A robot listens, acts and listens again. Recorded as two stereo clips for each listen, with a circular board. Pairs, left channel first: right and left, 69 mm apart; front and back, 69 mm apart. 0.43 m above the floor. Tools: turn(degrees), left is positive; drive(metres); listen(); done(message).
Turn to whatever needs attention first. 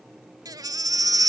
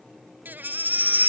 turn(degrees=115)
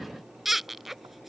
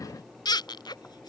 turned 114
done("Facing the baby crying.")